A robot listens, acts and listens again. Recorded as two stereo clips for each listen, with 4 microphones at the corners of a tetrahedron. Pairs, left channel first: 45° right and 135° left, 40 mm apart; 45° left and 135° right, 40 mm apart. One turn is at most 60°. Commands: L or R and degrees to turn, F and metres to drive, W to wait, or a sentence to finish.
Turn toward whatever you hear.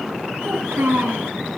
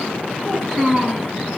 L60
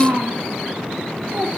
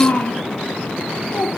L60
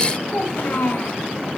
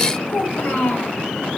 Facing the child speaking, 2 to 4 m away.